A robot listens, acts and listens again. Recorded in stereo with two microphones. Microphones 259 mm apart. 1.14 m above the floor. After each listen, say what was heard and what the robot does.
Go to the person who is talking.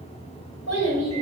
The child speaking: about 75° left or 105° left. Turn 75° left.
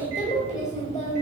So it is at 30° left. Turn 30° left.
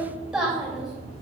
Drive 1.0 m forward.
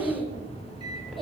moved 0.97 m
Drive 1.0 m forward.
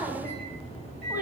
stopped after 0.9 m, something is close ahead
The child speaking is now 10° right. Turn 10° right.
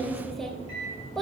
I am next to the child speaking.